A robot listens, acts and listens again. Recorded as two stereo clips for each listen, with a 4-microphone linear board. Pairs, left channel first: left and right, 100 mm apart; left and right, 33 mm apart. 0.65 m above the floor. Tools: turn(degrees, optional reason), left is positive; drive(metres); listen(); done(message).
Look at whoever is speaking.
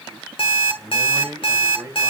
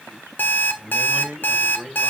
turn(degrees=-25, reason="The man speaking: about 25° right or 155° right.")
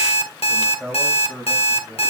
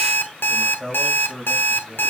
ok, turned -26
turn(degrees=10, reason="So it is at 10° left.")
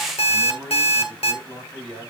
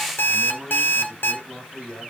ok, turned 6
turn(degrees=10, reason="The man speaking is now 10° left.")
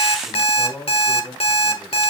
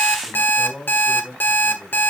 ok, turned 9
done("Found it: a man speaking, straight ahead.")